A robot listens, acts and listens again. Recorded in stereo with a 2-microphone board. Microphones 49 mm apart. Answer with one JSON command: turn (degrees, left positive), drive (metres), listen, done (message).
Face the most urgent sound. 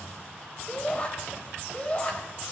{"turn": 25}
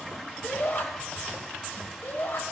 {"turn": 130}
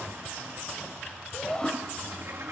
{"turn": 20}
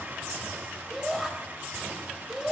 {"done": "Facing the shout, over 4 m away."}